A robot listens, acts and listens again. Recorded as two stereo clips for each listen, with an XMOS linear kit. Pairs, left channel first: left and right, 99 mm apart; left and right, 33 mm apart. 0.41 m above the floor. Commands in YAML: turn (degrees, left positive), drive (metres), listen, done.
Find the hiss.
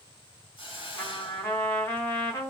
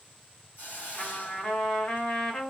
turn: 65
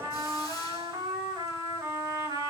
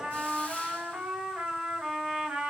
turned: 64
listen: true
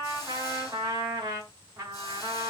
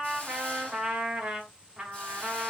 listen: true
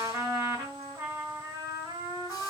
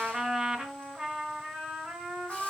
done: "I heard a hiss, but can't make it out now. It was about 5° left or 50° left."